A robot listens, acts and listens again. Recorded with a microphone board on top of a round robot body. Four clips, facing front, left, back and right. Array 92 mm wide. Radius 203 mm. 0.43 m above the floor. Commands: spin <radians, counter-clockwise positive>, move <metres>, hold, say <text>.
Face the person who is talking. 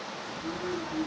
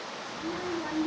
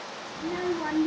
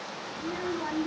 spin -2.97
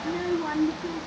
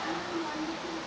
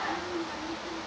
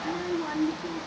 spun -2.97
spin -0.35
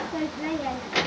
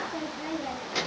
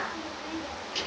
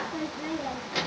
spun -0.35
say Facing the child speaking, under 1 m away.